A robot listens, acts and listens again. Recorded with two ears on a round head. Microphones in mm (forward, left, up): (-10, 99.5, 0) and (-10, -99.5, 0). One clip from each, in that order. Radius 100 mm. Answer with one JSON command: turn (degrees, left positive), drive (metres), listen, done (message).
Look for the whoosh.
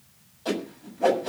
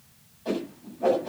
{"turn": 50}
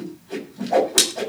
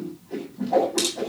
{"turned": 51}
{"turn": 75}
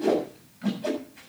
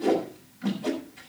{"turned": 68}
{"turn": 10}
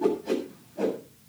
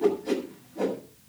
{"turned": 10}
{"done": "Found it: a whoosh, straight ahead, over 4 m away."}